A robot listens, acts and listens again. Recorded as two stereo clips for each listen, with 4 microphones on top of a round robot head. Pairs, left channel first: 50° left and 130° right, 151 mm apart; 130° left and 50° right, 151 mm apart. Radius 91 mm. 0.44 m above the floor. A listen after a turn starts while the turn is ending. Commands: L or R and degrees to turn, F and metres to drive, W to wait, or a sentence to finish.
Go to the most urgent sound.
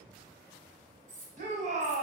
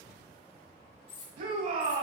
R90
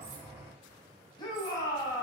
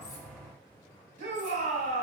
R15
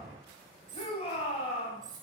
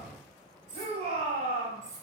F1.0
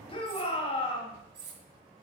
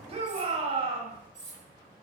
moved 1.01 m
F1.0
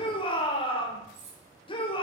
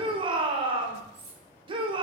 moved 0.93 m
F1.0
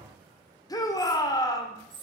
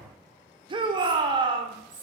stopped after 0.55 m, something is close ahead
Arrived at the shout, straight ahead.